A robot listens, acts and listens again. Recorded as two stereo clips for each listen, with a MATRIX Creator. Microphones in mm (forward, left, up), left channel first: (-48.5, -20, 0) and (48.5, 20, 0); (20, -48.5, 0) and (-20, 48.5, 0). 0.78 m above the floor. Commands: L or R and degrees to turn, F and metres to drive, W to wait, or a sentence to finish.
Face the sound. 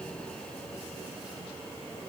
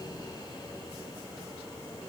W
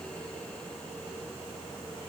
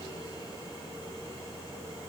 W
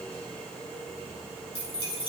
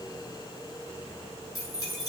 R125
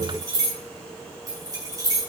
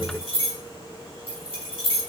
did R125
R35
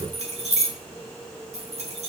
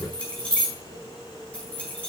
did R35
L10
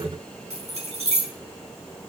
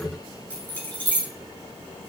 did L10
Found it: keys jangling, straight ahead.